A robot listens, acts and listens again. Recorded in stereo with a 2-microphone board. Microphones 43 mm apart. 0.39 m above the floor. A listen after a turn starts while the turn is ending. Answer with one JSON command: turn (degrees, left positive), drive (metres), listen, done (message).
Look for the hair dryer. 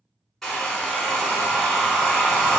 {"turn": 30}
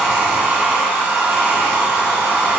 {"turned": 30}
{"turn": -25}
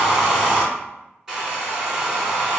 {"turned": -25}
{"turn": -15}
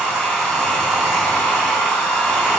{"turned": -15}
{"done": "Found it: a hair dryer, straight ahead, under 1 m away."}